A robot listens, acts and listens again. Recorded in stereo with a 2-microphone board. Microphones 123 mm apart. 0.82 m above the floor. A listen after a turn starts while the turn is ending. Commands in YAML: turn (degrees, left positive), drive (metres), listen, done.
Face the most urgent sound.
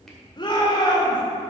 turn: 40
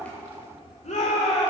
turn: 100
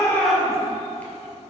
listen: true
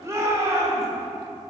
turn: -25
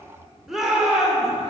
done: "Found it: a shout, straight ahead."